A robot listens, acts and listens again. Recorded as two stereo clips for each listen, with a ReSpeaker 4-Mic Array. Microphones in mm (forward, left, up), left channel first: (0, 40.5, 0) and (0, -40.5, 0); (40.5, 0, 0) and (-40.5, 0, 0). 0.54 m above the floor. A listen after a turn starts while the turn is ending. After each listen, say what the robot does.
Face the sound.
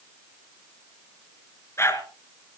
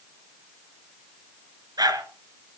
Turn 145° left.
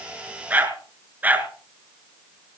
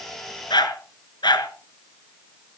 Turn 20° right.
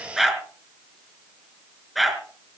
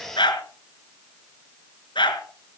Facing the dog barking, 2 to 4 m away.